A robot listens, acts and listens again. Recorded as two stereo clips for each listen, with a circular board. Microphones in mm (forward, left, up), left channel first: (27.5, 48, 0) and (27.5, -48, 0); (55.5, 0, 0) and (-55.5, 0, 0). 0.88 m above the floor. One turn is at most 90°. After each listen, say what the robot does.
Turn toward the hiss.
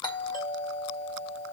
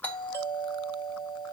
Keep listening.
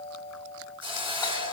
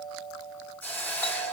Turn 70° right.
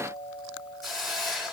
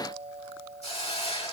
Found it: a hiss, straight ahead.